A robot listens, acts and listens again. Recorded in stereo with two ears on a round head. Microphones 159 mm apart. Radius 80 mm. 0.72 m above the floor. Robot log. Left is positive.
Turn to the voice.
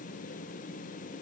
cmd idle
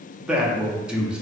cmd yaw -30
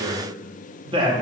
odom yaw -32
note: So it is at 145° right.
cmd yaw -145
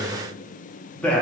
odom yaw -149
note: The man speaking is now 10° left.
cmd yaw +10
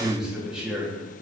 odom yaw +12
end: Facing the man speaking, under 1 m away.